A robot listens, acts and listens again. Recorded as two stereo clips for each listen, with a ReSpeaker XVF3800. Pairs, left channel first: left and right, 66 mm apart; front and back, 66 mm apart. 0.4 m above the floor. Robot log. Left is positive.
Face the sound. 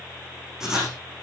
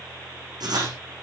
note: The writing: 170° right.
cmd yaw -170
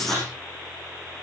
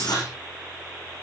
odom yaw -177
end: Found it: writing, straight ahead.